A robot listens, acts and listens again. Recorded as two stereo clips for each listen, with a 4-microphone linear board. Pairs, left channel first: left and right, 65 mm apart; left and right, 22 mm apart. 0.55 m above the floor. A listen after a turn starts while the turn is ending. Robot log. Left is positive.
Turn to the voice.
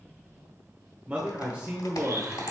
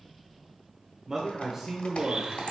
note: The man speaking: about 20° right or 160° right.
cmd yaw -20
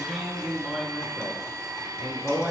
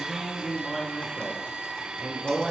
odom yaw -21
end: Found it: a man speaking, straight ahead.